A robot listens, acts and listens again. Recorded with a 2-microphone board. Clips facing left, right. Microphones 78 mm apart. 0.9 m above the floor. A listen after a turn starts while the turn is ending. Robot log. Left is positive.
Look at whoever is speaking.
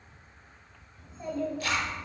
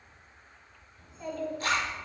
note: The child speaking: about 20° left or 160° left.
cmd yaw +20
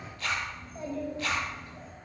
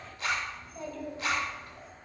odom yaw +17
note: The child speaking: about 25° left or 155° left.
cmd yaw +25
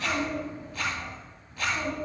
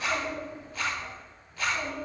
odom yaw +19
note: The child speaking: about 40° left or 140° left.
cmd yaw +40
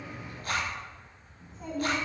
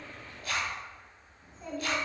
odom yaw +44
note: So it is at 100° left.
cmd yaw +100
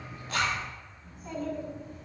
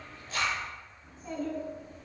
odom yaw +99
end: Facing the child speaking.